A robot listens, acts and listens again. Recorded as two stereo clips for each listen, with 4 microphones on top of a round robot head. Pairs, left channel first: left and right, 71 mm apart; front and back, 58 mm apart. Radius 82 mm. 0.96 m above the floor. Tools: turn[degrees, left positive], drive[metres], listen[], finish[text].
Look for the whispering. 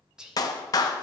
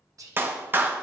Thought: The whispering: 170° right.
Action: turn[-170]
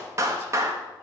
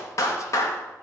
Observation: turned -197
Thought: Nothing new. It was at 30° left.
Action: turn[30]
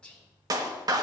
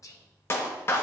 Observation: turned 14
Thought: The whispering is now 15° left.
Action: turn[15]
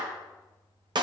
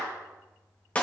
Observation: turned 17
Action: listen[]
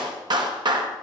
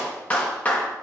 Action: listen[]
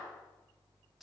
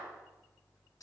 Action: finish[Found it: whispering, straight ahead.]